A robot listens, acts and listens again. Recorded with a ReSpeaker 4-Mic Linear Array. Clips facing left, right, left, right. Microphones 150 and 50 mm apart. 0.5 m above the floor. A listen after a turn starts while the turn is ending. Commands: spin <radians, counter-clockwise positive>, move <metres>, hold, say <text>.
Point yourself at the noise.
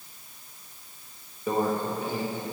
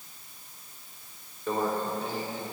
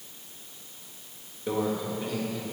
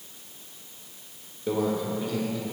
spin 0.52
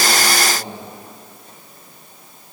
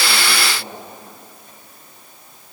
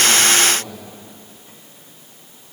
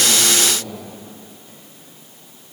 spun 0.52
hold
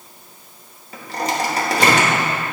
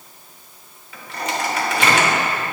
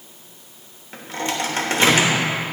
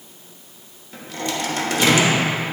spin 2.36
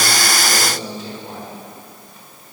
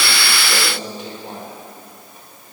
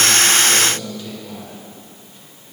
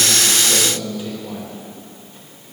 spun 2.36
spin -0.35
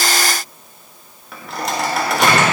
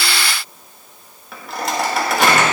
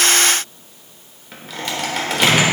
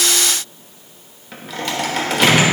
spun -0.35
say Facing the microwave, 1 to 2 m away.